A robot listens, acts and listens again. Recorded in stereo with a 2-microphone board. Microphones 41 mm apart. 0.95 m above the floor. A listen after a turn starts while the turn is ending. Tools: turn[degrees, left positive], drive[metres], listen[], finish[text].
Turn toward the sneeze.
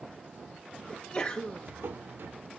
Thought: The sneeze: about 20° left or 160° left.
Action: turn[20]
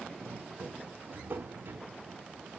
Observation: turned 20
Action: listen[]
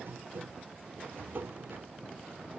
Action: finish[I heard a sneeze, but can't make it out now. It was about straight ahead or 140° left.]